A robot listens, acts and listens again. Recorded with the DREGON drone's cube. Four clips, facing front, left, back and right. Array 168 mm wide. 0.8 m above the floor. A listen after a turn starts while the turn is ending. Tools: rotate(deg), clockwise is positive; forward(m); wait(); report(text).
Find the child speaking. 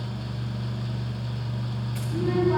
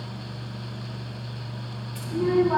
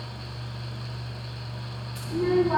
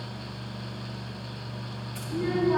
rotate(-125)
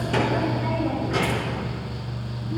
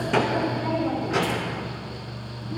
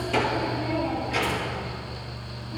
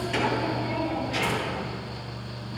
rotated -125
rotate(-50)
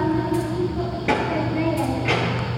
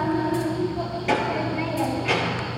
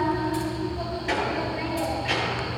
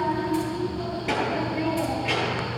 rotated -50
report("Found it: a child speaking, straight ahead, over 4 m away.")